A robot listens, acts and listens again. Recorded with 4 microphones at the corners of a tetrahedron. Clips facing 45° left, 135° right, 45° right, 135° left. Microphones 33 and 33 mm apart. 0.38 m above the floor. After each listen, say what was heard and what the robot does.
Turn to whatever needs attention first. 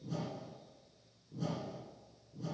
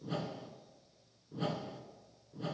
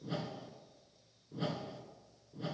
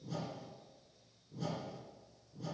Keep listening.
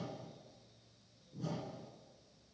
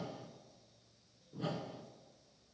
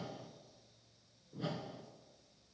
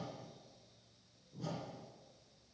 Keep listening.
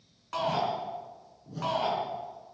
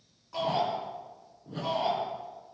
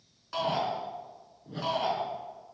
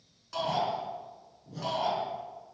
The shout: 25° left. Turn 25° left.
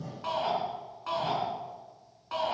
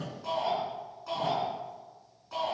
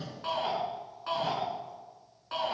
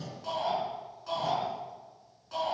Facing the shout, over 4 m away.